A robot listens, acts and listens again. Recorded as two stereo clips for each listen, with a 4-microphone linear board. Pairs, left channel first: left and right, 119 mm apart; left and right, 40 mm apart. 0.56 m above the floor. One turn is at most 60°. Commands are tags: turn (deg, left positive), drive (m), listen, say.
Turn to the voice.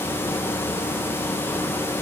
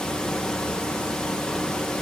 <listen/>
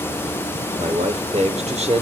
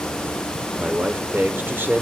<turn deg="-60"/>
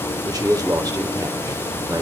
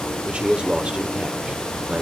<turn deg="-35"/>
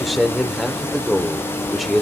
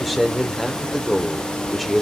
<say>Facing the man speaking, 1 to 2 m away.</say>